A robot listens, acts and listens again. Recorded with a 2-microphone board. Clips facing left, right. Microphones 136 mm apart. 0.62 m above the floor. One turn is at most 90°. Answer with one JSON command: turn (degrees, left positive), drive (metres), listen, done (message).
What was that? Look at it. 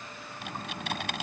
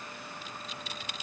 {"turn": 70}
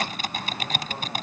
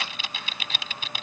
{"turn": 45}
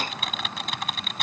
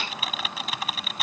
{"done": "Found it: typing on a keyboard, straight ahead."}